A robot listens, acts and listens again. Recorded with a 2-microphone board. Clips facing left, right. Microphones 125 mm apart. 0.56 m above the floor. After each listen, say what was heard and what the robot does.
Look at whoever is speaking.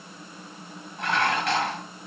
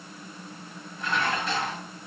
Keep listening.
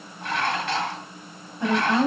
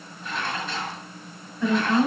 The woman speaking: about 25° left or 155° left. Turn 25° left.
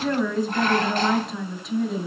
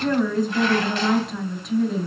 Facing the woman speaking, 2 to 4 m away.